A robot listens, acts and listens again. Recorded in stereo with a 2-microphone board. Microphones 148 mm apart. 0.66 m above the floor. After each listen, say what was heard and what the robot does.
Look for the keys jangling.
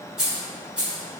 Turn 30° right.
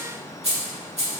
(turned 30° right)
So it is at 130° right. Turn 130° right.
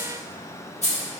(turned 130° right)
The keys jangling is now 50° left. Turn 50° left.
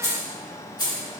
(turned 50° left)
The keys jangling is now 30° left. Turn 30° left.
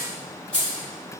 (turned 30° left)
Facing the keys jangling.